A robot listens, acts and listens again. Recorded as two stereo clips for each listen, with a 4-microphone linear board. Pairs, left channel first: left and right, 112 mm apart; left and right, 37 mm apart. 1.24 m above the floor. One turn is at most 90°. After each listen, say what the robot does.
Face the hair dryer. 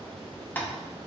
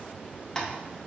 Keep listening.
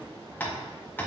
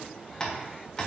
Keep listening.
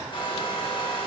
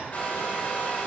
Turn 50° left.
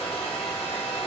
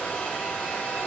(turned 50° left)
Turn 70° left.
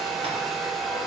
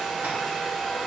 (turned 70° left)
Found it: a hair dryer, straight ahead.